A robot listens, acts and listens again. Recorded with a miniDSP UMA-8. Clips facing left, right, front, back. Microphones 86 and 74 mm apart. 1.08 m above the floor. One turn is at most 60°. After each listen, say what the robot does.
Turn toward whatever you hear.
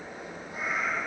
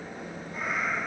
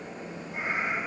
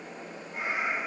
Turn 50° left.
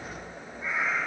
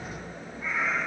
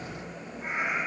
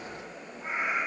Turn 15° left.
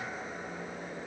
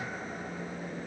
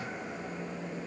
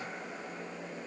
Keep listening.
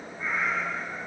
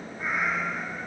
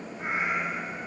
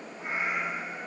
Turn 15° right.
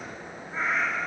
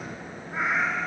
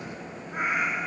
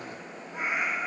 Turn 25° right.
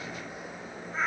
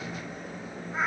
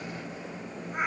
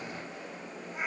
Turn 10° right.
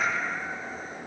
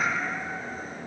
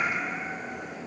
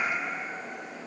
Found it: a cat meowing, straight ahead.